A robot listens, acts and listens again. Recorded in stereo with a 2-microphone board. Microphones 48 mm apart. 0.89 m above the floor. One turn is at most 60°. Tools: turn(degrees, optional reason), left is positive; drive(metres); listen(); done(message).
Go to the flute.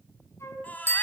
turn(degrees=60, reason="The flute: about 70° left or 110° left.")
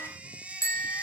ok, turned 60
listen()
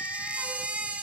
listen()
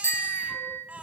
done("I heard a flute, but can't make it out now. It was about 10° left or 50° left. I did not reach it.")